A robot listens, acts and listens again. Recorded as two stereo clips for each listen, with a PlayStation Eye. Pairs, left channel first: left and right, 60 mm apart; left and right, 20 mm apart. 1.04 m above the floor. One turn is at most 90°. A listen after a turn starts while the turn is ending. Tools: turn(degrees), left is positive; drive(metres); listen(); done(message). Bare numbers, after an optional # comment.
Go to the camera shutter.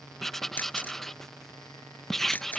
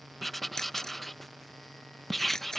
# The camera shutter: about 30° left or 150° left.
turn(30)
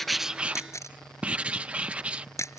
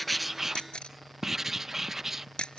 # So it is at 120° left.
turn(90)
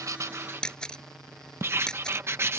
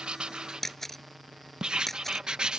# The camera shutter is now 15° left.
turn(15)
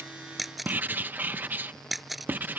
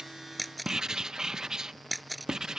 drive(1.0)
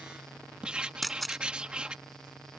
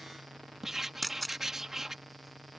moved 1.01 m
drive(1.0)
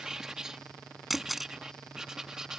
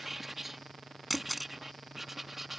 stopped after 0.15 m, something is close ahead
done("Arrived at the camera shutter, straight ahead.")